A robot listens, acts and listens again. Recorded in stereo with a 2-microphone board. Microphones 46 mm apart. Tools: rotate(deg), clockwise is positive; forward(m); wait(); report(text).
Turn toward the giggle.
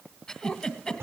rotate(-20)
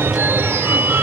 wait()
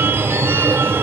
wait()
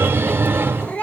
report("I heard a giggle, but can't make it out now. It was about straight ahead or 140° left.")